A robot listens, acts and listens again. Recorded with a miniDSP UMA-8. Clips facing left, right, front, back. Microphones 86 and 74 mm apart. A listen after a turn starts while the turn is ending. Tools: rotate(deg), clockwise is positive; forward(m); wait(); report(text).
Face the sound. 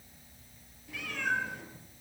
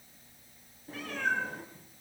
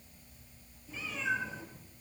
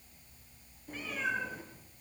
rotate(140)
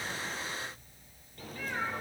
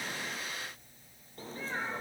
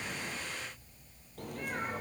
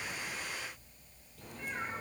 rotate(30)
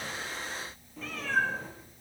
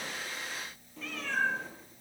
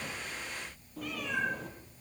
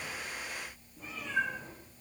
report("Found it: a cat meowing, straight ahead.")